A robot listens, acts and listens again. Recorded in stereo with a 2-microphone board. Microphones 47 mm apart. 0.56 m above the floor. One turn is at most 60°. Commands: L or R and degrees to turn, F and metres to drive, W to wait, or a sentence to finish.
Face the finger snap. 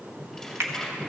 R60
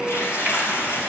W
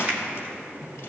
W
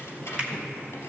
R25
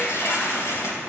W
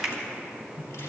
R10
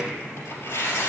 W
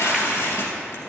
W
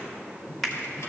Facing the finger snap.